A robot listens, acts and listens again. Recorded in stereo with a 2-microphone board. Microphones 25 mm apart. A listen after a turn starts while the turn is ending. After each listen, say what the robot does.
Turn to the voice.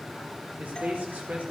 Turn 90° right.
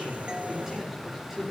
Turn 10° right.
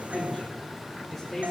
Found it: a man speaking, straight ahead, over 4 m away.